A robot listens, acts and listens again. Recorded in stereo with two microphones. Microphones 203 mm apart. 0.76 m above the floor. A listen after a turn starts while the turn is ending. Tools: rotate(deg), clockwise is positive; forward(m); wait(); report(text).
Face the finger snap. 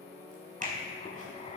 rotate(40)
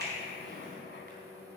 wait()
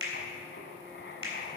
rotate(100)
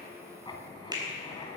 rotate(20)
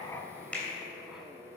report("Found it: a finger snap, straight ahead.")